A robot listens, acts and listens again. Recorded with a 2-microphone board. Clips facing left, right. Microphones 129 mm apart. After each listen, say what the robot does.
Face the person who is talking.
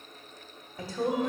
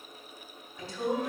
Turn 50° left.
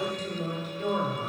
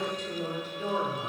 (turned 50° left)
Turn 10° left.
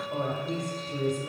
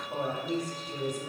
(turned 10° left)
Facing the woman speaking.